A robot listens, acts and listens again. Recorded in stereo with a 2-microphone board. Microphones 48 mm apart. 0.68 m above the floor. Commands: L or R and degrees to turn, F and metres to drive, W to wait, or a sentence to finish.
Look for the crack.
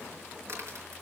R75
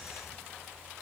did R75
W
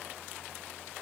I heard a crack, but can't make it out now. It was about straight ahead or 30° right.